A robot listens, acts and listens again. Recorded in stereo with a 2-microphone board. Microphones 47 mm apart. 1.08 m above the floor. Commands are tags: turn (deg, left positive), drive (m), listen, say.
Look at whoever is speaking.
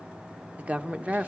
<turn deg="-30"/>
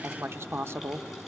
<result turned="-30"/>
<turn deg="-120"/>
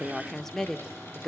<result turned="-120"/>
<say>Facing the woman speaking, under 1 m away.</say>